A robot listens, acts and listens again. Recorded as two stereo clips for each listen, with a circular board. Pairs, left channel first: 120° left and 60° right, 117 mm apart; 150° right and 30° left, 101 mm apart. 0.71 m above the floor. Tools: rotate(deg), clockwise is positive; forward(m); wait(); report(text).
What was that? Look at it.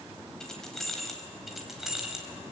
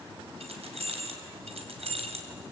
rotate(-25)
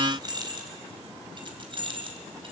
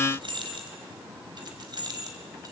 rotate(20)
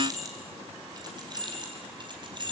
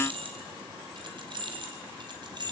rotate(15)
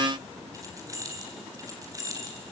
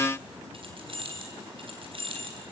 report("Facing the keys jangling.")